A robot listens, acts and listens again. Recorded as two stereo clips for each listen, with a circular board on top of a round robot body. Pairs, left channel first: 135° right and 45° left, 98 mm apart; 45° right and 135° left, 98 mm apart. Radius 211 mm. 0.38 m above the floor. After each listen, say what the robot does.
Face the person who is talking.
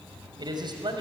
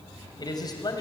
Found it: a man speaking, straight ahead, over 4 m away.